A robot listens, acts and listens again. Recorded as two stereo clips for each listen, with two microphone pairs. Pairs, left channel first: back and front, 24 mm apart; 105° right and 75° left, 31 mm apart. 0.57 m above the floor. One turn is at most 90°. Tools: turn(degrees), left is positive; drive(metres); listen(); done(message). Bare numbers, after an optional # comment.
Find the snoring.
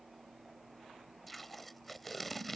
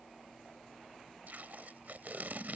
listen()
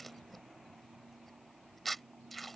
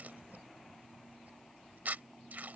listen()
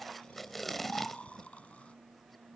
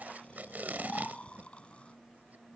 # The snoring: 160° right.
turn(-90)
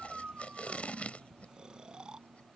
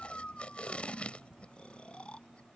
# The snoring is now 55° right.
turn(-55)
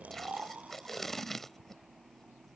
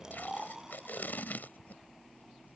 done("Found it: snoring, straight ahead.")